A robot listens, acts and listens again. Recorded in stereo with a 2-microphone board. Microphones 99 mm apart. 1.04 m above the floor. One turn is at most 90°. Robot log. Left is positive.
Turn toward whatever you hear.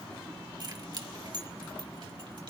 note: The keys jangling: about 50° right or 130° right.
cmd yaw -50
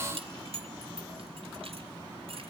note: So it is at 75° right.
cmd yaw -75
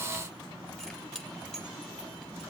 note: The keys jangling is now 10° left.
cmd yaw +10
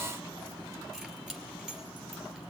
end: Facing the keys jangling.